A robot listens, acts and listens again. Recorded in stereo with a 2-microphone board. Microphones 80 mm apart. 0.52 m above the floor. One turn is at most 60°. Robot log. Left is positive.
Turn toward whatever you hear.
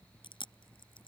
note: The chewing: about 75° left or 105° left.
cmd yaw +60
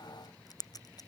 note: So it is at 45° left.
cmd yaw +45
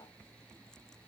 cmd idle
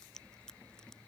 cmd idle
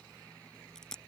end: Facing the chewing.